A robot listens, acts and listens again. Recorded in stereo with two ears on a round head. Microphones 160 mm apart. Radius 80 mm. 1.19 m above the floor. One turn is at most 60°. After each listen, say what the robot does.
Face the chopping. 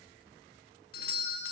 Keep listening.
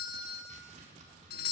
Turn 40° right.
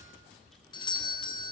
Keep listening.
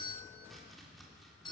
Facing the chopping, 2 to 4 m away.